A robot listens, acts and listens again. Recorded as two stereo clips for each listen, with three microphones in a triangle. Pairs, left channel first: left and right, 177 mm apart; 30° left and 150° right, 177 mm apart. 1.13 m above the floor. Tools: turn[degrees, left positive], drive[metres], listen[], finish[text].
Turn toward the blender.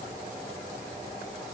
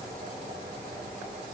Action: listen[]
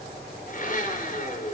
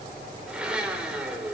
Thought: The blender: 125° left.
Action: turn[125]
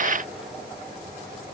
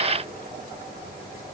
Action: listen[]
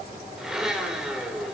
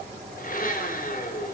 Action: finish[Facing the blender, over 4 m away.]